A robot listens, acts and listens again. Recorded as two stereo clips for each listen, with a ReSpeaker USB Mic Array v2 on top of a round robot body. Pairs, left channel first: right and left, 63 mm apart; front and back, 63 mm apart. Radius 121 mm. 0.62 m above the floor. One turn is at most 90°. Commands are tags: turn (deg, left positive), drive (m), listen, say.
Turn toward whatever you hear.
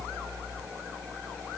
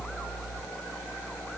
<listen/>
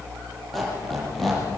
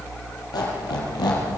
<say>Found it: a squeak, straight ahead, over 4 m away.</say>